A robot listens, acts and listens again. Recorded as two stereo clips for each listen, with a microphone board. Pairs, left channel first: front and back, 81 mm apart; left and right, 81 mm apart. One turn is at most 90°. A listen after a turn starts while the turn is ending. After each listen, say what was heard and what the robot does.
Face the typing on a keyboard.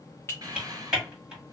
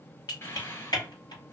The typing on a keyboard: 100° left. Turn 90° left.
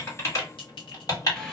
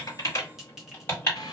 The typing on a keyboard is now 35° left. Turn 35° left.
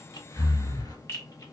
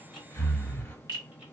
Keep listening.
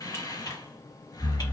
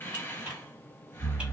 Keep listening.
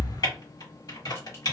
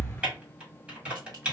The typing on a keyboard is now 15° right. Turn 15° right.
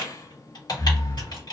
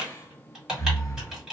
The typing on a keyboard is now 10° right. Turn 10° right.
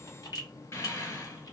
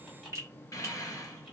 Keep listening.
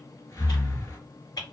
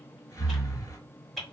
Facing the typing on a keyboard, 1 to 2 m away.